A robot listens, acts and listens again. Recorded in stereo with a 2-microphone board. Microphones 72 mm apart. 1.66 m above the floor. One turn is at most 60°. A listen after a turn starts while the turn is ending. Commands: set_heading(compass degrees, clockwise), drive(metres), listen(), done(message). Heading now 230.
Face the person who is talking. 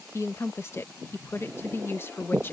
set_heading(200)
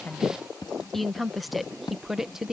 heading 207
done("Facing the woman speaking.")